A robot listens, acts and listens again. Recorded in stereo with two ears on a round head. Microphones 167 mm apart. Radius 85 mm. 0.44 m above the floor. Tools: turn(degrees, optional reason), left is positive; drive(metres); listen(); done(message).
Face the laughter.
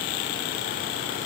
listen()
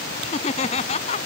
turn(degrees=35, reason="The laughter: about 35° left or 145° left.")
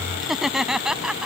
done("Found it: laughter, straight ahead.")